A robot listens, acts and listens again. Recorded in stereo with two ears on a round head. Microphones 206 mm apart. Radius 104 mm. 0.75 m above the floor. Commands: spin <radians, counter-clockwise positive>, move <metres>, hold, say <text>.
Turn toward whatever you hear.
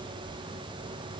hold
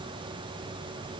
hold
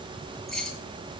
spin 0.52
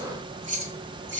spin -0.52
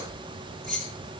say Facing the keys jangling.